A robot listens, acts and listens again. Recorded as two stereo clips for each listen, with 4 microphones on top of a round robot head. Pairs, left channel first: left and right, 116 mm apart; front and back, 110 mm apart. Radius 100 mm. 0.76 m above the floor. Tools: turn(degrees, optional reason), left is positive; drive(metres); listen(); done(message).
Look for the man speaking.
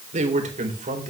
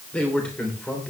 turn(degrees=-85, reason="The man speaking: 85° right.")
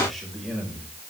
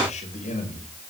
done("Facing the man speaking, over 4 m away.")